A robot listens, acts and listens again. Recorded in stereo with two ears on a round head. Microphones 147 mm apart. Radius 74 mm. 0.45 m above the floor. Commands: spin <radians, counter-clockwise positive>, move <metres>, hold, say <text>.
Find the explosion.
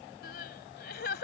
hold
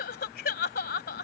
hold
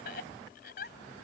say I can't make out an explosion to turn to.